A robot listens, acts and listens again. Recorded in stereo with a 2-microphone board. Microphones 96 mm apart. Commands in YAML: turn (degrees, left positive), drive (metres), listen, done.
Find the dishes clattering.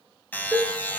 turn: -30
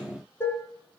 turn: 25
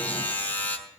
listen: true
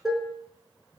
done: "Found it: dishes clattering, straight ahead."